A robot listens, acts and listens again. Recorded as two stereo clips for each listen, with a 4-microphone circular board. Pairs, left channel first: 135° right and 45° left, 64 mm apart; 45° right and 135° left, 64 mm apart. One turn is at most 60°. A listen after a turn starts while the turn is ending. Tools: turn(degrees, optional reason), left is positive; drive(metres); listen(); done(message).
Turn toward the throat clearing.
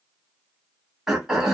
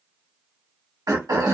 turn(degrees=60, reason="The throat clearing: 125° left.")
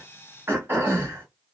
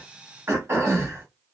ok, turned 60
turn(degrees=60, reason="The throat clearing is now 90° left.")
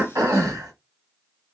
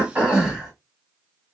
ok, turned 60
turn(degrees=60, reason="The throat clearing is now 60° left.")
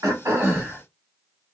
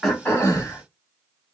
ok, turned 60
turn(degrees=-10, reason="The throat clearing is now 10° right.")
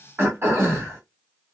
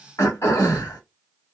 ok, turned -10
done("Found it: throat clearing, straight ahead.")